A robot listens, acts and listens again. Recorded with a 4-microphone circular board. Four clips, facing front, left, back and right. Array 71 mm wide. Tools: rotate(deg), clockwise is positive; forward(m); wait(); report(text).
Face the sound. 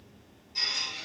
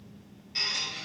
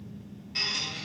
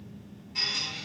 rotate(-155)
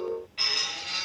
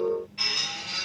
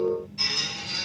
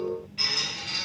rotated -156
report("Facing the squeak.")